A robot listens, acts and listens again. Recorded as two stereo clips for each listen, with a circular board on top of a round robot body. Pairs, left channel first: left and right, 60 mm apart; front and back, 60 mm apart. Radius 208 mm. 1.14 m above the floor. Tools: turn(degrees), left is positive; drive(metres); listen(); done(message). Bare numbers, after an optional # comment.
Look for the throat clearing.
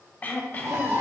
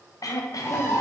# The throat clearing: 25° left.
turn(25)
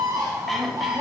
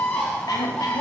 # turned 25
done("Facing the throat clearing.")